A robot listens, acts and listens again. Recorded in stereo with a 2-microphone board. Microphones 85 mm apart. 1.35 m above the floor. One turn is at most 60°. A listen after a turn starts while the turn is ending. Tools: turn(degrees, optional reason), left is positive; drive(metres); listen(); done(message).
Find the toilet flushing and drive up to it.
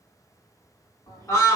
turn(degrees=55, reason="The toilet flushing: about 55° left or 125° left.")
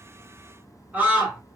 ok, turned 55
turn(degrees=25, reason="So it is at 25° left.")
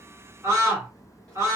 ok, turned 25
drive(metres=1.0)
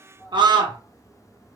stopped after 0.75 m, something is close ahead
turn(degrees=10, reason="The toilet flushing is now 10° left.")
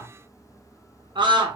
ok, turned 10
done("Arrived at the toilet flushing, straight ahead.")